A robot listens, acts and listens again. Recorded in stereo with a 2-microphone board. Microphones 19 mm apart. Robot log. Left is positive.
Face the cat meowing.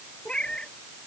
note: The cat meowing: about 75° left or 105° left.
cmd yaw +75
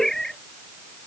note: So it is at 30° left.
cmd yaw +30
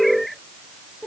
end: Found it: a cat meowing, straight ahead.